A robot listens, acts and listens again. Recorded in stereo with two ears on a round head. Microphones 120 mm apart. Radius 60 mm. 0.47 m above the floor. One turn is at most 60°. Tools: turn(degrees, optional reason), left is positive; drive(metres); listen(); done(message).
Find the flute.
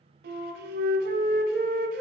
turn(degrees=-60)
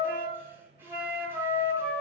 turn(degrees=-20, reason="So it is at 20° right.")
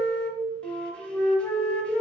done("Facing the flute, under 1 m away.")